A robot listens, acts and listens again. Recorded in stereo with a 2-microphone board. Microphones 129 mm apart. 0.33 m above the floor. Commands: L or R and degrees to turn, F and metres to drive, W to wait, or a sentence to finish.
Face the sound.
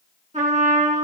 R70
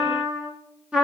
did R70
R10
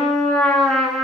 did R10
Facing the trumpet.